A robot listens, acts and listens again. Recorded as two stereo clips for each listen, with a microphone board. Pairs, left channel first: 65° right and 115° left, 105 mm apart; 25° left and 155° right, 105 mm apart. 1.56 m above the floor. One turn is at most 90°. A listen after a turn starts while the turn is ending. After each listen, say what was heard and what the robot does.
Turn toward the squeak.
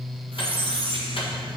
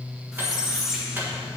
The squeak: 120° left. Turn 90° left.
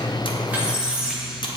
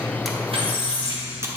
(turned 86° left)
The squeak is now 35° left. Turn 35° left.
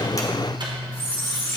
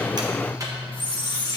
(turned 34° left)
Facing the squeak, 1 to 2 m away.